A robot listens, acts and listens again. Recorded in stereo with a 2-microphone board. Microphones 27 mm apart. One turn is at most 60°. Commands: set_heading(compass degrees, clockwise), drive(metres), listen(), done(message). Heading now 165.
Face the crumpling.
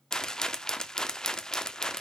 listen()
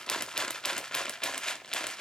listen()
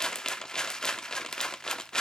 done("I can't make out crumpling to turn to.")